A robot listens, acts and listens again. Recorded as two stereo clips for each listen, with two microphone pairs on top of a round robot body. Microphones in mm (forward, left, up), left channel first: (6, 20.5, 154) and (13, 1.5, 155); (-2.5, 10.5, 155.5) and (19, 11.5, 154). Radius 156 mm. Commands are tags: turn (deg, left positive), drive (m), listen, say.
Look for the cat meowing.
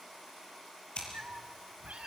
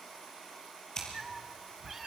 <turn deg="-70"/>
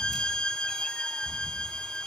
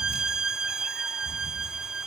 <listen/>
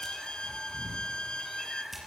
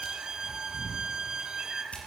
<say>Facing the cat meowing, 2 to 4 m away.</say>